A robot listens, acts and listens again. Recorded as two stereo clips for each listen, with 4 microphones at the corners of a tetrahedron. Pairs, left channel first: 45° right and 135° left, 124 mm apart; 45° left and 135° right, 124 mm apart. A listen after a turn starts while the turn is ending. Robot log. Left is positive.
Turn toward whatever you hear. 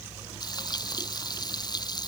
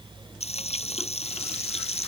note: The frying: 10° left.
cmd yaw +10
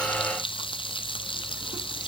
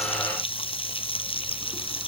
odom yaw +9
end: Facing the frying.